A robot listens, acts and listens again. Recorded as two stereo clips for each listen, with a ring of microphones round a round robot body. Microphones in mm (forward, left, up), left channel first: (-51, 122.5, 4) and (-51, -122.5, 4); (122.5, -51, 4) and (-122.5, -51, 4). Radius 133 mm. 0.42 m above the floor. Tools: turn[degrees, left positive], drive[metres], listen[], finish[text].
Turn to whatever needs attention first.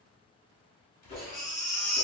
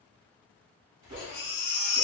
Thought: The baby crying: 20° left.
Action: turn[20]
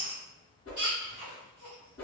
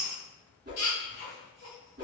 Action: finish[Found it: a baby crying, straight ahead.]